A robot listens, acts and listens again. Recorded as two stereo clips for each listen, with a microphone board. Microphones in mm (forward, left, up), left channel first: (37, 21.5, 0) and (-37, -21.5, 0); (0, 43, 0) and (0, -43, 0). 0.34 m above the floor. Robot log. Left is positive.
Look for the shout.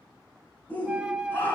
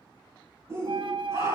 note: The shout: 35° right.
cmd yaw -35
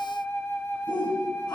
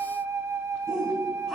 end: Found it: a shout, straight ahead.